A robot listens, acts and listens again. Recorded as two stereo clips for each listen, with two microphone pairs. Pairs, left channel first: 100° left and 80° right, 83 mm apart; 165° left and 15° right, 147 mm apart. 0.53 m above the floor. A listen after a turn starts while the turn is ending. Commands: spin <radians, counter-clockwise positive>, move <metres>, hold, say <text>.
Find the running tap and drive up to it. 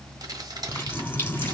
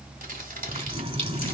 spin 0.61
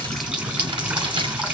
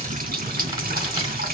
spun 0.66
move 1.0
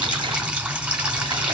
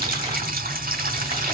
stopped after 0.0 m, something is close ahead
say Blocked. The running tap is further on, straight ahead.